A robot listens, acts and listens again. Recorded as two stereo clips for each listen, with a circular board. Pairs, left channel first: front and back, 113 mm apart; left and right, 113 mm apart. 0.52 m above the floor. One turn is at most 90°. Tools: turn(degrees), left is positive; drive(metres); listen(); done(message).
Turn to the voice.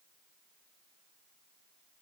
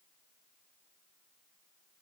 listen()
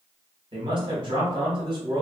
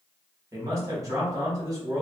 turn(degrees=-90)
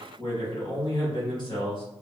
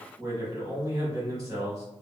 turn(degrees=-35)
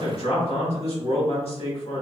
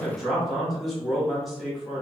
done("Facing the man speaking.")